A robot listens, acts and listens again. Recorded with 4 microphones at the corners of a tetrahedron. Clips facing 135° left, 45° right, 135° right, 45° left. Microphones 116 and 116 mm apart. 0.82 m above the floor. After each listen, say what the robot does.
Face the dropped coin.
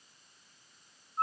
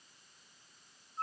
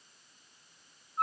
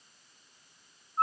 Keep listening.
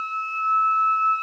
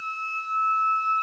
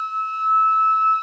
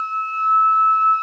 Keep listening.
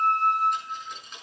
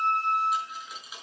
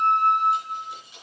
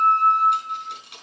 Turn 40° left.
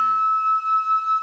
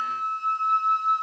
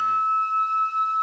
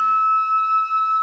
Facing where the dropped coin came from. I can't hear it now.